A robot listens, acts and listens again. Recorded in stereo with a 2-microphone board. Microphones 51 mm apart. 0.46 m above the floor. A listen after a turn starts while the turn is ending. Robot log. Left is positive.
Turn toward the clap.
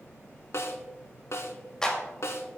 cmd yaw +30
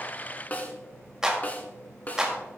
note: So it is at 15° right.
cmd yaw -15
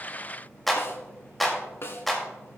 end: Facing the clap.